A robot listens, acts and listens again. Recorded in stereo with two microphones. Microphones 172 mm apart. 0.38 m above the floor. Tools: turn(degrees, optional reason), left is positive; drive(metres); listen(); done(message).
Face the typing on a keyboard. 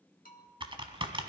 turn(degrees=-30, reason="The typing on a keyboard: about 30° right or 150° right.")
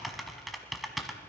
done("Found it: typing on a keyboard, straight ahead, under 1 m away.")